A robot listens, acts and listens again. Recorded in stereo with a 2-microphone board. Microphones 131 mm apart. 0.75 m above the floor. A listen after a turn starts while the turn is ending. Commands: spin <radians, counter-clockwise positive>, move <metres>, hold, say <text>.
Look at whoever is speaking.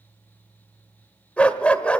hold
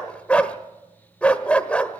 hold
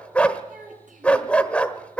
spin -1.57
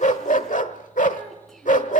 hold
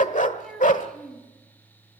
say Facing the child speaking.